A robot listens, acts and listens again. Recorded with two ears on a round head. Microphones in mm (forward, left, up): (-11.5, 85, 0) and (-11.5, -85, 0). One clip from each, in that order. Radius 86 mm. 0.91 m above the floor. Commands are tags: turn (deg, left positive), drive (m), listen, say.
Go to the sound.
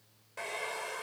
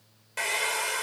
<turn deg="-70"/>
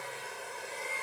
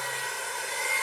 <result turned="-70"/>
<turn deg="-40"/>
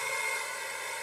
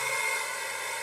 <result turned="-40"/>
<drive m="1.0"/>
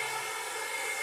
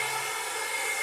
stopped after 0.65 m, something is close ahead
<turn deg="-10"/>
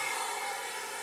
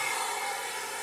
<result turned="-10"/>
<say>Blocked. The hair dryer is further on, straight ahead.</say>